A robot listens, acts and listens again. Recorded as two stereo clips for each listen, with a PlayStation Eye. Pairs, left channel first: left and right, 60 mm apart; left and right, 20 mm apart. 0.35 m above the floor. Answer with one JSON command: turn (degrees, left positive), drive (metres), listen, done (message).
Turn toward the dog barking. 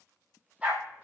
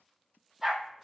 {"turn": -25}
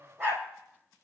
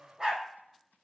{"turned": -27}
{"turn": -135}
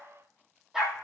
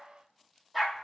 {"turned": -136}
{"turn": -10}
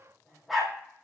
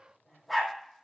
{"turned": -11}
{"done": "Found it: a dog barking, straight ahead, 2 to 4 m away."}